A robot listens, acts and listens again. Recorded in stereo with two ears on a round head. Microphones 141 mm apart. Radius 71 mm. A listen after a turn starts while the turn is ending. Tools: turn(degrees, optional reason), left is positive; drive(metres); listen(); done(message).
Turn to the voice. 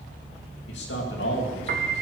turn(degrees=90)
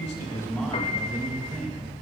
done("Found it: a man speaking, straight ahead.")